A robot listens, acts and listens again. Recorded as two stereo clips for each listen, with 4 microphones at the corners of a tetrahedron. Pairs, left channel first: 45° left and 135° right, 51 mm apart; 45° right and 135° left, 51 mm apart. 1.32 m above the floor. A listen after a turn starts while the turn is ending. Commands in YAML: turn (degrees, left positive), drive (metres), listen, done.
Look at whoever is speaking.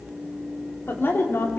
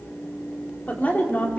done: "Found it: a woman speaking, straight ahead, 2 to 4 m away."